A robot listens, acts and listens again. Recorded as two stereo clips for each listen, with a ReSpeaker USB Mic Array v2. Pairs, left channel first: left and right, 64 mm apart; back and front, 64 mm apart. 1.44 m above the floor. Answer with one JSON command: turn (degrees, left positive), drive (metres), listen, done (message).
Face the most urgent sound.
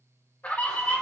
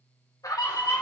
{"turn": 155}
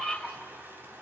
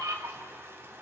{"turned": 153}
{"done": "Facing the scream, 2 to 4 m away."}